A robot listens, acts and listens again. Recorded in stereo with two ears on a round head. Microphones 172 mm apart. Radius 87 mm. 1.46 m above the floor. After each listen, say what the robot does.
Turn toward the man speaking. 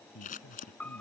Turn 90° left.
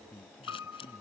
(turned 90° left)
Turn 10° left.
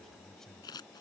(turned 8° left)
Facing the man speaking.